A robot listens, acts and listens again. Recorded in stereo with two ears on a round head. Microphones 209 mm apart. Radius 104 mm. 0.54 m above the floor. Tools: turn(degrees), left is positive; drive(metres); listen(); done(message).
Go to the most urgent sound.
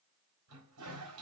listen()
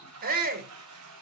turn(degrees=-40)
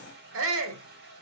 turn(degrees=-90)
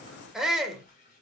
drive(metres=1.0)
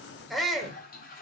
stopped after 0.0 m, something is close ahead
done("Something is in my way. I am facing the shout but have not reached it.")